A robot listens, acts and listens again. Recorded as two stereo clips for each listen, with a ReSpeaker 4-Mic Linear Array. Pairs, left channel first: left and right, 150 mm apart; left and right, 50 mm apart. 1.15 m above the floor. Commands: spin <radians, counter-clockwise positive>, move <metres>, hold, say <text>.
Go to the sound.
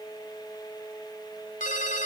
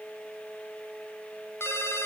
spin 0.96
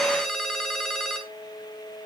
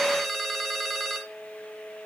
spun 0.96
move 1.0
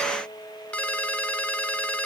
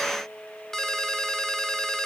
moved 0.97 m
spin 0.17
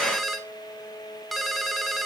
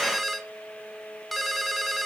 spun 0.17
move 1.0
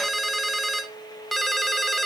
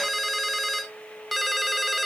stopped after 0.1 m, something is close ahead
say I am next to the ringtone.